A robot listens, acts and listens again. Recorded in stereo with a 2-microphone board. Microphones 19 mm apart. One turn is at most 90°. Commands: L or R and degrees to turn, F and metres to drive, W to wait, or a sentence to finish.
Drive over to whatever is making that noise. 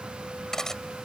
L25
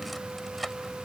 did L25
F1.0
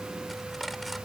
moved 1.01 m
W
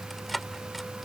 F1.0
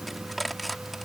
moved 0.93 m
F1.0
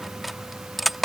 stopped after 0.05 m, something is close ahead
Arrived at the cutlery clinking, straight ahead.